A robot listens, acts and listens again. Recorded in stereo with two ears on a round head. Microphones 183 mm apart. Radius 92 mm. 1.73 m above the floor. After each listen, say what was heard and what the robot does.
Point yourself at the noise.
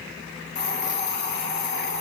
The hiss: about 55° left or 125° left. Turn 55° left.
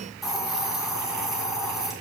Found it: a hiss, straight ahead, 2 to 4 m away.